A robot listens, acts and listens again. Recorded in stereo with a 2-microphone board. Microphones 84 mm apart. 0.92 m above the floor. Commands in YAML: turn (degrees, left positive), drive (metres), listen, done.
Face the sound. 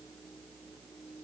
listen: true
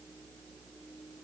listen: true
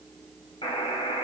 turn: 70
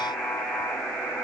done: "Found it: a buzzer, straight ahead, over 4 m away."